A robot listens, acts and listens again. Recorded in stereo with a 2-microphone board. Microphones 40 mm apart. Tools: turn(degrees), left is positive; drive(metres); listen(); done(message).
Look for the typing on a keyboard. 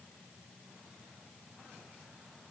listen()
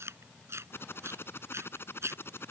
turn(degrees=65)
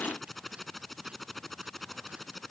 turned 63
done("Found it: typing on a keyboard, straight ahead.")